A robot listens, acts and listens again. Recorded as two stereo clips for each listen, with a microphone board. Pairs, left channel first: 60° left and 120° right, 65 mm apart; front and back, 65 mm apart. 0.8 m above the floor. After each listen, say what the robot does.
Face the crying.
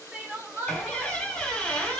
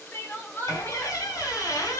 Turn 60° right.
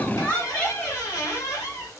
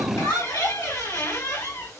Turn 15° right.
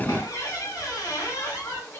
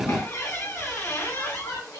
Keep listening.
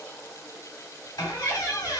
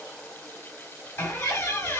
Keep listening.
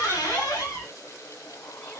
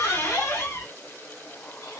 Found it: crying, straight ahead, 1 to 2 m away.